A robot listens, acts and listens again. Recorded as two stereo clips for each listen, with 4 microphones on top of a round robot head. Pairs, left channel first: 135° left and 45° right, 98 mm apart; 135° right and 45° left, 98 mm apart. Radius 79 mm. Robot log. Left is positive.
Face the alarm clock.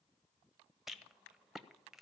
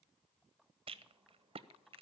cmd idle
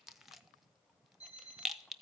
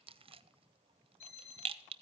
note: The alarm clock: 120° right.
cmd yaw -120
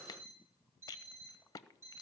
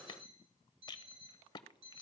note: The alarm clock is now 20° left.
cmd yaw +20
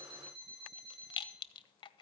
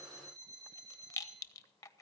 end: Found it: an alarm clock, straight ahead, over 4 m away.